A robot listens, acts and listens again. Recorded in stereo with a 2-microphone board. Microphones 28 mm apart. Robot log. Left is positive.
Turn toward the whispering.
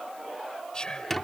note: The whispering: about 30° left or 150° left.
cmd yaw +30
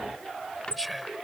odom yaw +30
end: Facing the whispering.